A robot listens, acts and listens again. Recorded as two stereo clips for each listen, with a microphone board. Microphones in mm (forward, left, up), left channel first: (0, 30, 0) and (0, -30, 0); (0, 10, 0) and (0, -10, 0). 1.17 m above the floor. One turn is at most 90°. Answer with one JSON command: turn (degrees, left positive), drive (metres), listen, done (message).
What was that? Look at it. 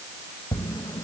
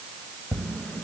{"turn": 90}
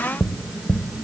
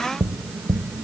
{"done": "Found it: tapping, straight ahead, under 1 m away."}